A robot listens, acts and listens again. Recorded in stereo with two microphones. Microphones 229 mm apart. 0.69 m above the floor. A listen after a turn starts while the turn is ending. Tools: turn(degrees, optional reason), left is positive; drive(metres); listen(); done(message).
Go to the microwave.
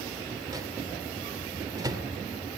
turn(degrees=-15, reason="The microwave: about 15° right or 165° right.")
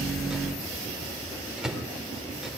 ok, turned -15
drive(metres=1.0)
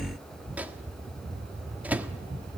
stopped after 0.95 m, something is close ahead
turn(degrees=-10, reason="The microwave is now 10° right.")
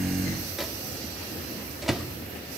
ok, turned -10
done("Arrived at the microwave, straight ahead.")